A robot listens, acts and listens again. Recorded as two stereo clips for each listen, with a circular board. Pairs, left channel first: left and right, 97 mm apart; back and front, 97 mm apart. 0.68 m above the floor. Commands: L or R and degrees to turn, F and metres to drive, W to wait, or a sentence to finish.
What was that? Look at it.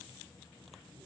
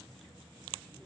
W
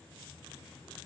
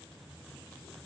W
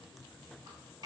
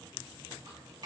R45
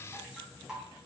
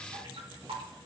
R10
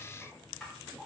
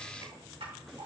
Facing the dripping.